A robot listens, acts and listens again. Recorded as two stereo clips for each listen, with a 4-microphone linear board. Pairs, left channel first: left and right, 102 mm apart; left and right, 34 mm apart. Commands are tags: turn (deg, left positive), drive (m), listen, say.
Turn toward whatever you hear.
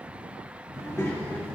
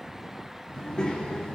<turn deg="25"/>
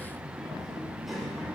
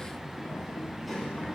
<say>Facing the child speaking.</say>